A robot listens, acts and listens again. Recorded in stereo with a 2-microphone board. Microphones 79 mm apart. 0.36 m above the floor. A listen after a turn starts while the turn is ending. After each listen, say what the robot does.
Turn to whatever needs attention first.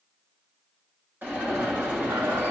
Turn 25° right.
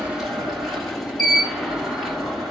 Facing the alarm.